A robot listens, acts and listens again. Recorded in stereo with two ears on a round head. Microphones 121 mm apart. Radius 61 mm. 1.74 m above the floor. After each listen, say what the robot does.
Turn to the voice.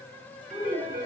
Turn 30° left.
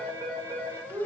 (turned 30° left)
Turn 25° right.
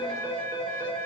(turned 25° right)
Keep listening.
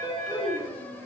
Found it: a child speaking, straight ahead.